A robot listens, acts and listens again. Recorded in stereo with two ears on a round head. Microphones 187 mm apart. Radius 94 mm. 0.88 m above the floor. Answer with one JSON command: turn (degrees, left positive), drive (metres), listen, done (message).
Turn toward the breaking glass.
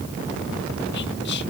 {"listen": true}
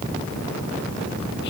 {"listen": true}
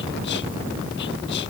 {"done": "I can't make out breaking glass to turn to."}